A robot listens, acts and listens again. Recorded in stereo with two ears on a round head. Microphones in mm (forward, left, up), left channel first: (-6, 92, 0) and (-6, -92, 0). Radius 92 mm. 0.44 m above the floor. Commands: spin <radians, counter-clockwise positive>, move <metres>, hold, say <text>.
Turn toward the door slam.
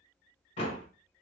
spin 0.61
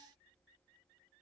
hold
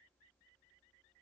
say I heard a door slam, but can't make it out now. It was about straight ahead or 110° left.